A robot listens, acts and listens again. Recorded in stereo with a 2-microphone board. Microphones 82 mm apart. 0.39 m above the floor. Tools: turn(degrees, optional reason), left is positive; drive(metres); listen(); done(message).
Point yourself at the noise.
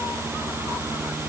listen()
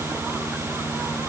listen()
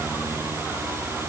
done("I can't make out anything to turn to.")